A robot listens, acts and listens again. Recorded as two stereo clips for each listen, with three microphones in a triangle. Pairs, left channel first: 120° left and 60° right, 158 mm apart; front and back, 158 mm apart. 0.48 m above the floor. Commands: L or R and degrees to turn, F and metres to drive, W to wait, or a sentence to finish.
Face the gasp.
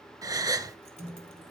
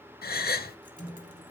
L10
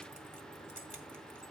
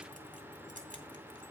I heard a gasp from this way, but can't make it out now.